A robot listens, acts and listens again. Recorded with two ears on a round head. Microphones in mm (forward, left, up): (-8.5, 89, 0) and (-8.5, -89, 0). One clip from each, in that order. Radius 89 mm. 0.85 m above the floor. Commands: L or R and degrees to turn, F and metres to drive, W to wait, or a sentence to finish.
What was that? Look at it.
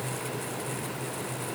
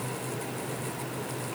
W
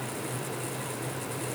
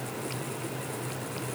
W
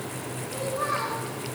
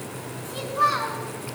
R90
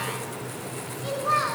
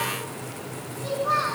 Found it: a child speaking, straight ahead.